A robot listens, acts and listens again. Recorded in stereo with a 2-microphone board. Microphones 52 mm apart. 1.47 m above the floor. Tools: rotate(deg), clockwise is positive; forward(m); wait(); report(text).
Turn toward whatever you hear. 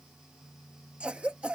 rotate(25)
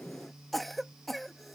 report("Facing the cough.")